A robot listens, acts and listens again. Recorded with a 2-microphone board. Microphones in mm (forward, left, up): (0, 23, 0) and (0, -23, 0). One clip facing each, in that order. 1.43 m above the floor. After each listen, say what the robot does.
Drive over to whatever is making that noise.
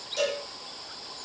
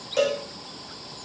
Turn 40° right.
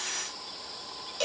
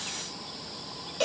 Drive 1.0 m forward.
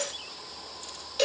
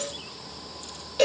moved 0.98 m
Drive 1.0 m forward.
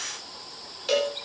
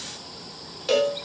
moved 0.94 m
Drive 1.0 m forward.
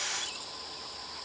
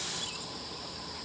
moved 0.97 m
Keep listening.
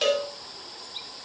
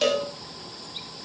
Turn 10° left.
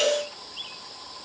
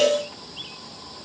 Drive 1.0 m forward.
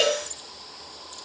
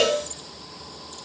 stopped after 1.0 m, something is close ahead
I am next to the cowbell.